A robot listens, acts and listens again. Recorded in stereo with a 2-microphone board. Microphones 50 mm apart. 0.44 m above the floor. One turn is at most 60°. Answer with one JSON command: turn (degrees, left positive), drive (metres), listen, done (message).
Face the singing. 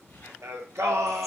{"turn": -60}
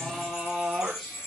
{"done": "Found it: singing, straight ahead, 2 to 4 m away."}